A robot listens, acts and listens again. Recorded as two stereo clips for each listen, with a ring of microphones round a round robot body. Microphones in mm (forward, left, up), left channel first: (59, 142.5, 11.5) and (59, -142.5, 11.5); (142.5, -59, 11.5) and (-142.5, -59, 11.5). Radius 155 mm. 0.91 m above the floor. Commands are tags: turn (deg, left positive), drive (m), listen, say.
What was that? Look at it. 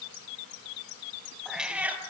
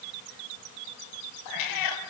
<say>Found it: a cat meowing, straight ahead.</say>